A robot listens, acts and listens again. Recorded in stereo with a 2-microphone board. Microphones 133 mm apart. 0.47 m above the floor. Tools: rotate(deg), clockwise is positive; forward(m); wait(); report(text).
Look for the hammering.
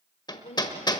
rotate(-35)
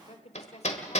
rotate(-110)
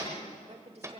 rotate(25)
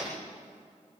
rotate(10)
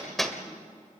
report("Found it: hammering, straight ahead, 1 to 2 m away.")